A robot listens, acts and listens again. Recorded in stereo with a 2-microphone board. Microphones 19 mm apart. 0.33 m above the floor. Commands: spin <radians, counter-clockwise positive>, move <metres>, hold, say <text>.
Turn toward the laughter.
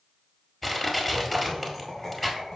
spin 0.52
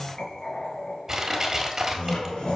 spin 2.27
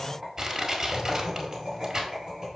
spin -0.17
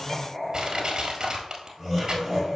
say Facing the laughter.